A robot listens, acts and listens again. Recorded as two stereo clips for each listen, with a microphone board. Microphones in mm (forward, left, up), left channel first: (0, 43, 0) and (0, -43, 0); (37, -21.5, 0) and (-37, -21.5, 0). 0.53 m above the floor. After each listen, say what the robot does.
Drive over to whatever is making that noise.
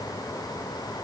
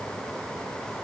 Keep listening.
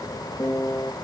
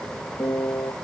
Turn 30° left.
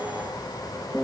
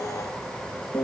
Turn 10° left.
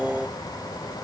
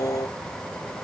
Drive 1.0 m forward.
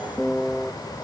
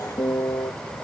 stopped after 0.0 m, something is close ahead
Something is in my way. I am facing the piano but have not reached it.